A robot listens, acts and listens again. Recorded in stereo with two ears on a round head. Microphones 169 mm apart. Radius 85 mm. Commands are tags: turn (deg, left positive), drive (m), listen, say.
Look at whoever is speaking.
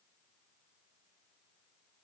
<listen/>
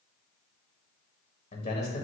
<turn deg="35"/>
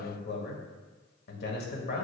<turn deg="100"/>
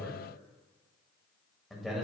<say>Facing the man speaking, 1 to 2 m away.</say>